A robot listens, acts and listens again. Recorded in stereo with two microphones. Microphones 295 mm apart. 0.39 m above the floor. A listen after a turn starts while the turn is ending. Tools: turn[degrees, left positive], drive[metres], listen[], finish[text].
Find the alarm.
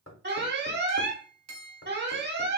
Thought: The alarm: about 35° right or 145° right.
Action: turn[-35]
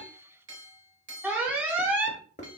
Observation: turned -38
Action: finish[Facing the alarm.]